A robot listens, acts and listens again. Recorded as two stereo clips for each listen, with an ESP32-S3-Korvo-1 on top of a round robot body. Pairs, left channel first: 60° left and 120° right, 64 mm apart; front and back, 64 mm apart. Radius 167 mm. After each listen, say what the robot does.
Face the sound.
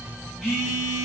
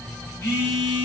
Turn 35° right.
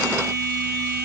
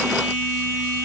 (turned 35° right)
Facing the phone buzzing.